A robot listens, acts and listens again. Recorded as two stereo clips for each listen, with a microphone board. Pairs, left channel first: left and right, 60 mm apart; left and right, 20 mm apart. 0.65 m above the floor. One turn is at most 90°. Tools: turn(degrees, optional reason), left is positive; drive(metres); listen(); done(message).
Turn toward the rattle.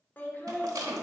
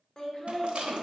turn(degrees=-90)
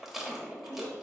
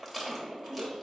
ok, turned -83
done("Found it: a rattle, straight ahead.")